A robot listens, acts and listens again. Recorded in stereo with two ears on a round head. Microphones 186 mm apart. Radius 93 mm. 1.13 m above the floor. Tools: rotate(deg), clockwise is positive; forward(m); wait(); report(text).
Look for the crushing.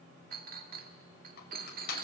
rotate(-50)
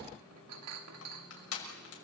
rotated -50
rotate(-80)
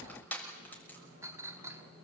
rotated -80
rotate(-10)
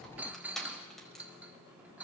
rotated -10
report("Facing the crushing, over 4 m away.")